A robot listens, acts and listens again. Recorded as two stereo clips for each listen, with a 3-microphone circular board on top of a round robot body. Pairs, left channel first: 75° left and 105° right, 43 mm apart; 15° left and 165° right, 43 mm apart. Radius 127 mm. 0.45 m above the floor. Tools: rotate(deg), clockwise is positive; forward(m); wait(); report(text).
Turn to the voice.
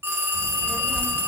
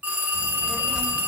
rotate(-110)
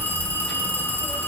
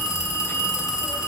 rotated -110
rotate(25)
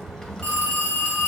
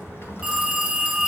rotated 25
report("Facing the child speaking, 1 to 2 m away.")